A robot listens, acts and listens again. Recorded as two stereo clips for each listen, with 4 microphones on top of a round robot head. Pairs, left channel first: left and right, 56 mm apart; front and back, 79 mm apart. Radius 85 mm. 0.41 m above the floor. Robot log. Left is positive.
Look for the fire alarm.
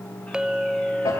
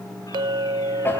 cmd idle
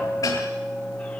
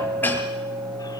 cmd idle
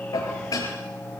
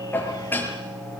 end: I can't make out a fire alarm to turn to.